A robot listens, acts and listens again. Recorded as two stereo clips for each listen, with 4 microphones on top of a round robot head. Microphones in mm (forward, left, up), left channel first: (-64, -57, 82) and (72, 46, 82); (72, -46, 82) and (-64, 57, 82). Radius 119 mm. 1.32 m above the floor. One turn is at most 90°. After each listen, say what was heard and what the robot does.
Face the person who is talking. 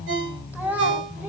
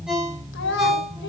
The child speaking: 45° right. Turn 45° right.
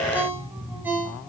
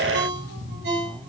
Keep listening.
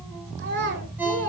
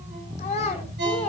The child speaking is now 15° left. Turn 15° left.
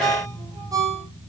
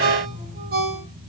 Keep listening.
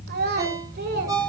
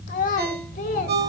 The child speaking is now 10° left. Turn 10° left.
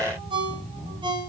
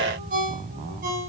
Keep listening.
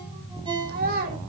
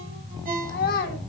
Facing the child speaking.